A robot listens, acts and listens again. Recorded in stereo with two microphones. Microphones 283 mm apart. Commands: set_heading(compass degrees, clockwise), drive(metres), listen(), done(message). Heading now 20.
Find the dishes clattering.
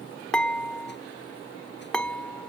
set_heading(350)
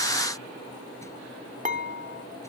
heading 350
set_heading(15)
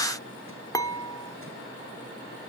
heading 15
set_heading(5)
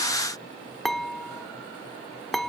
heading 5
done("Facing the dishes clattering.")